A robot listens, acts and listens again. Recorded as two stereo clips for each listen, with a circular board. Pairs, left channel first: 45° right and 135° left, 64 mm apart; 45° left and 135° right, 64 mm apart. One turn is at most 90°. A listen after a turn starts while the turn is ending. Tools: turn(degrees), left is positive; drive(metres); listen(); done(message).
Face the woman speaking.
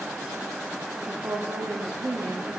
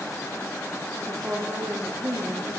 turn(degrees=90)
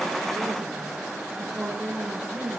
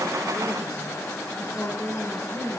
turn(degrees=60)
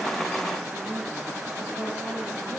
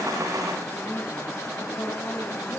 listen()
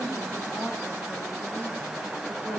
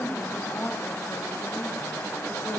done("Facing the woman speaking, over 4 m away.")